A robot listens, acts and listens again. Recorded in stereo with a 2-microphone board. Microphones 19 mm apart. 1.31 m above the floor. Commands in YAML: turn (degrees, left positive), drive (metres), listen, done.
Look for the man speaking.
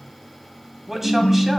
turn: -15
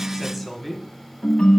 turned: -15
done: "Facing the man speaking."